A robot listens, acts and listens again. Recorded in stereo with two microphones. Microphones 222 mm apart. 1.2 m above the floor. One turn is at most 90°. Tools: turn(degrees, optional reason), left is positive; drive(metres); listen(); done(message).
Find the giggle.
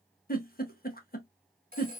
turn(degrees=40, reason="The giggle: about 40° left or 140° left.")
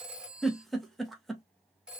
done("Facing the giggle.")